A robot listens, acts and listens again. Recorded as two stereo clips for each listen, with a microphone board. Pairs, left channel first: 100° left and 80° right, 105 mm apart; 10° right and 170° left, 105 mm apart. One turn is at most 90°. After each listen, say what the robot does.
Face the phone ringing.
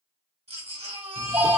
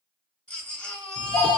Turn 20° right.
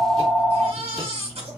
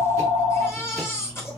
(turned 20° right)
Found it: a phone ringing, straight ahead, 1 to 2 m away.